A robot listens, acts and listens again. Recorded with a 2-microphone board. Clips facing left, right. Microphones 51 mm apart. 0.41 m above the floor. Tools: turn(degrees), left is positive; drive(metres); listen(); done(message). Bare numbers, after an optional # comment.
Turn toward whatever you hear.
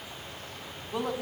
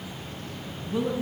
# The woman speaking: about 65° left or 115° left.
turn(65)
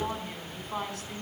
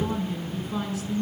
# So it is at 50° left.
turn(50)
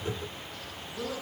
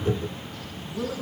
done("Found it: a woman speaking, straight ahead, over 4 m away.")